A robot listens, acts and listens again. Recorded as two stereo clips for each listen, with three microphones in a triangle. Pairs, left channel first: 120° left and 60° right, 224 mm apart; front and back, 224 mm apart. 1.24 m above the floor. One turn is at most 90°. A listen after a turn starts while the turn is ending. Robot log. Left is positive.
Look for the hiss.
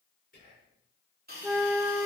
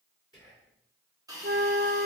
note: The hiss: 105° right.
cmd yaw -90
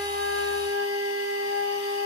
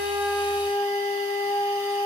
note: Nothing new. It was at 15° right.
cmd yaw -15
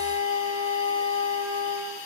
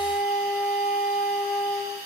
note: The hiss is now 10° right.
cmd yaw -10
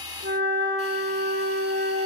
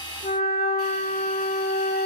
cmd idle
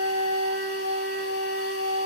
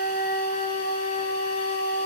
cmd idle
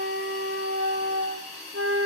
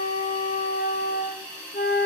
end: Facing the hiss, 2 to 4 m away.